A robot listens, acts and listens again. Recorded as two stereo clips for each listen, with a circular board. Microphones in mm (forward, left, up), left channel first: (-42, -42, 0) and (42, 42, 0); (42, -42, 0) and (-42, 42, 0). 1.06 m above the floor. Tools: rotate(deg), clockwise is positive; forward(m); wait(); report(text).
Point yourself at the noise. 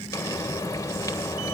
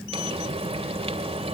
rotate(-160)
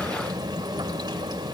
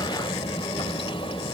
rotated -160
rotate(10)
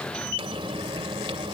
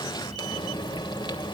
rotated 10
report("Found it: frying, straight ahead, 2 to 4 m away.")